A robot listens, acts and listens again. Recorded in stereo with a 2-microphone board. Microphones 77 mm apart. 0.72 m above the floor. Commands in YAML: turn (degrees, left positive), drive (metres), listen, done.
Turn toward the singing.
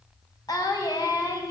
turn: 60
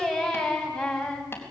done: "Facing the singing, over 4 m away."